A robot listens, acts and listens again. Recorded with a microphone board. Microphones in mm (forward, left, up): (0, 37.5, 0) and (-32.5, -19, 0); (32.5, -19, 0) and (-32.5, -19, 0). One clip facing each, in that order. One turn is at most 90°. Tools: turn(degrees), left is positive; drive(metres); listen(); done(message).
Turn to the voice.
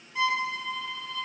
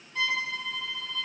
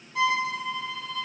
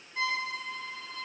listen()
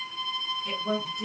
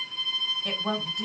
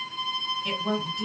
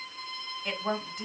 turn(degrees=-90)
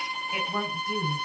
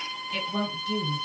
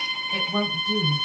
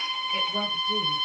turn(degrees=-10)
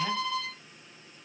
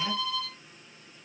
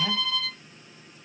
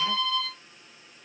listen()
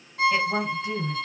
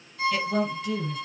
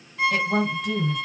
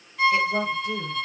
done("Facing the woman speaking, 1 to 2 m away.")